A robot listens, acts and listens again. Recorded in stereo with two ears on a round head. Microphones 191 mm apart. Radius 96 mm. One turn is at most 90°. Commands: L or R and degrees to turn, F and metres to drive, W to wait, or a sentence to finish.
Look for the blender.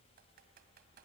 W
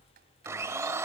R30
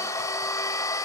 L15
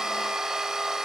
Facing the blender, under 1 m away.